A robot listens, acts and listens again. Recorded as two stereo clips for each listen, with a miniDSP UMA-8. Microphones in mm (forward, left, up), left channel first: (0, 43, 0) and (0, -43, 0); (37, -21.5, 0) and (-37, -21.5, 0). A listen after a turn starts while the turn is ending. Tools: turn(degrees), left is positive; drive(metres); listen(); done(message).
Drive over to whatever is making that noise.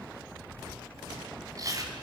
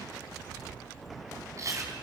turn(degrees=-135)
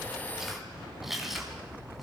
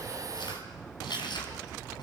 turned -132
drive(metres=1.0)
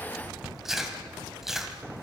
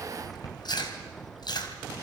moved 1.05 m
drive(metres=1.0)
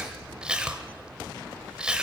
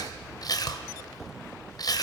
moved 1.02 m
turn(degrees=-15)
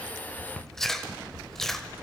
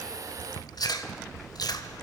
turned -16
drive(metres=1.0)
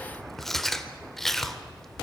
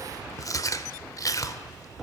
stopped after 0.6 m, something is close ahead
done("I am next to the chewing.")